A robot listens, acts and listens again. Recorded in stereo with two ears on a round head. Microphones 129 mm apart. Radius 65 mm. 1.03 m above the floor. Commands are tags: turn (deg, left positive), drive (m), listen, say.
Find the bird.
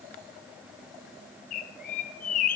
<turn deg="60"/>
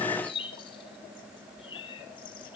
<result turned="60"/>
<turn deg="40"/>
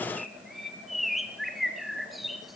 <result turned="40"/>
<say>Facing the bird, 1 to 2 m away.</say>